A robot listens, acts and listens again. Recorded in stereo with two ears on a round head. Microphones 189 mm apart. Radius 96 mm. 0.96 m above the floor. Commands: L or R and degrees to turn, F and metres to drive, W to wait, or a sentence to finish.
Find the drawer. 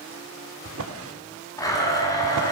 R70
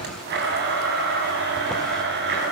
W
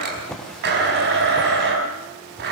Found it: a drawer, straight ahead, 1 to 2 m away.